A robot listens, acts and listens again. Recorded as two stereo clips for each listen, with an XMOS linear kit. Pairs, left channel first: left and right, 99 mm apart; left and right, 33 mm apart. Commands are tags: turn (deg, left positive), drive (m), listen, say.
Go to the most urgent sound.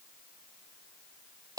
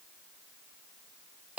<listen/>
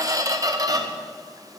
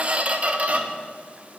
<listen/>
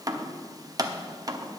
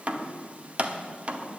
<say>I can't make out anything urgent to turn to.</say>